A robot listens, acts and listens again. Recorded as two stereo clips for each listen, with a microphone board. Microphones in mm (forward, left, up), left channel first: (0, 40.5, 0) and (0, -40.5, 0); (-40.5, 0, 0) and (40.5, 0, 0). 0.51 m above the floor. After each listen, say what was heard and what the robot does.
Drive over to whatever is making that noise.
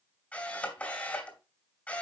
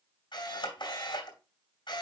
The camera shutter: 160° left. Turn 160° left.
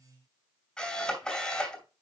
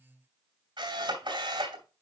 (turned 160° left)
The camera shutter is now 10° left. Turn 10° left.
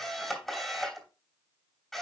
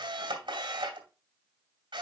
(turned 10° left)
Drive 1.0 m forward.
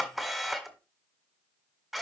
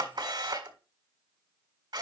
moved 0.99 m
Drive 1.0 m forward.
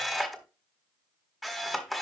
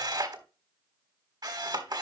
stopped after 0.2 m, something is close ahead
Arrived at the camera shutter, straight ahead.